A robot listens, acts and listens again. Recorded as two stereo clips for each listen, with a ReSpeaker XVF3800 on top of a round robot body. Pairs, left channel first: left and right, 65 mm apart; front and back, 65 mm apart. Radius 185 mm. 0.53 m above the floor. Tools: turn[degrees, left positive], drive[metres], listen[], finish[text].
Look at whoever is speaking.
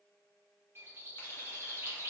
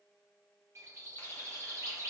Action: listen[]
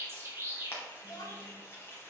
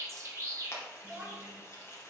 Thought: The child speaking: 115° left.
Action: turn[115]
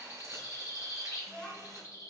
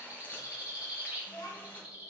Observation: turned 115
Thought: The child speaking is now 15° left.
Action: turn[15]
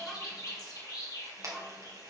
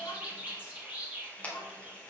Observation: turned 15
Action: finish[Found it: a child speaking, straight ahead.]